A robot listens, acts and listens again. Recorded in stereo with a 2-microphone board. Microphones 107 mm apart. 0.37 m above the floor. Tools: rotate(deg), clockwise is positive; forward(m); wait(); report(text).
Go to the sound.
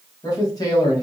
rotate(-35)
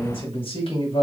rotate(-105)
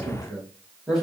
forward(1.0)
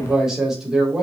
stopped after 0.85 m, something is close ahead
report("Arrived at the man speaking, straight ahead.")